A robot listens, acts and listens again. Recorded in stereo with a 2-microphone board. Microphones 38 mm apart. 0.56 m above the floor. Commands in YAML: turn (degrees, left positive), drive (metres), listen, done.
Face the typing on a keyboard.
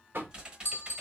turn: -25
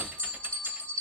listen: true
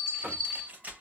turn: -130
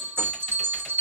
listen: true
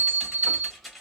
done: "Facing the typing on a keyboard, under 1 m away."